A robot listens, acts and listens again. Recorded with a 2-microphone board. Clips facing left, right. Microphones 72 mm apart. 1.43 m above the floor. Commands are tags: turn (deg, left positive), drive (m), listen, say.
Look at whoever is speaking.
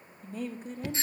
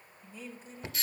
<turn deg="55"/>
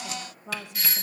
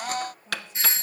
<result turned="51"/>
<turn deg="75"/>
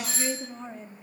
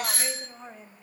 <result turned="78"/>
<say>Facing the woman speaking.</say>